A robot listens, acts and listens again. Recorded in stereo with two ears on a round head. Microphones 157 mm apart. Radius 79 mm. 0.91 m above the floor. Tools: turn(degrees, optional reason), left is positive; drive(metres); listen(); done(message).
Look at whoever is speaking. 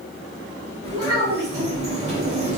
turn(degrees=-90)
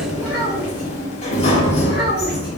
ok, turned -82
turn(degrees=-10, reason="Nothing new. It was at 10° right.")
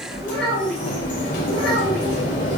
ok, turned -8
done("Facing the child speaking, 2 to 4 m away.")